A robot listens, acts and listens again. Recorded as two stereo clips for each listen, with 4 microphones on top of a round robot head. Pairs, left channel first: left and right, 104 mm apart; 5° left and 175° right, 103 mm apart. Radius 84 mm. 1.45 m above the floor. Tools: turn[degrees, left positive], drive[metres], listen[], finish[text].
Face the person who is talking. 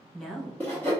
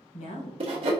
Action: finish[Facing the woman speaking.]